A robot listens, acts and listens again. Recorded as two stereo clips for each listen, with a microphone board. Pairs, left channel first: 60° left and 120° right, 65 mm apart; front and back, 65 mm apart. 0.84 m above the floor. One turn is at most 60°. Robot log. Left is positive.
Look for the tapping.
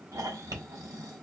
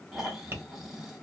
note: The tapping: 130° right.
cmd yaw -60
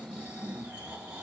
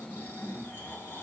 note: Nothing new. It was at 70° right.
cmd yaw -60
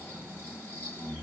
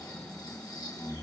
note: Nothing new. It was at 10° right.
cmd yaw -10
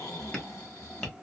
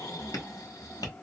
note: The tapping is now 15° right.
cmd yaw -15
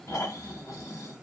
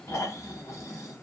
cmd idle
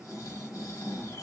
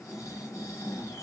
cmd idle
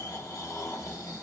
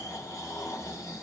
end: Facing where the tapping came from. I can't hear it now.